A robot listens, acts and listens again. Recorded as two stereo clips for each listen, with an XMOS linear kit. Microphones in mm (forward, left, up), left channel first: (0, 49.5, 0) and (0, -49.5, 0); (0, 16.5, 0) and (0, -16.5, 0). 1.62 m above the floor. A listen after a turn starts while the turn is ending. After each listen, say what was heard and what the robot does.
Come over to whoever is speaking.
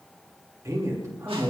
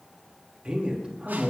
The man speaking: about 30° right or 150° right. Turn 30° right.
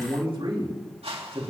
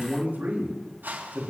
So it is at 120° right. Turn 120° right.
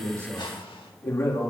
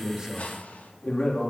The man speaking is now 25° left. Turn 25° left.
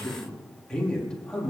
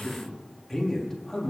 The man speaking is now 10° left. Turn 10° left.
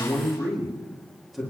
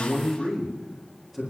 Drive 1.0 m forward.
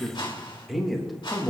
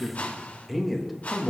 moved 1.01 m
Drive 1.0 m forward.
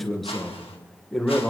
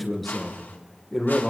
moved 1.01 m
Drive 1.0 m forward.
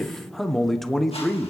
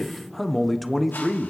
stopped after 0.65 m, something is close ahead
I am next to the man speaking.